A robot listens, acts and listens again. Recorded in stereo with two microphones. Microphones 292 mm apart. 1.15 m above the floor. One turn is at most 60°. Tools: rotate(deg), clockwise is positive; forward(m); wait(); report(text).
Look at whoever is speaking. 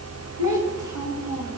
rotate(-60)
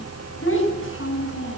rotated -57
rotate(-45)
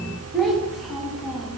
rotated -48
report("Found it: a child speaking, straight ahead.")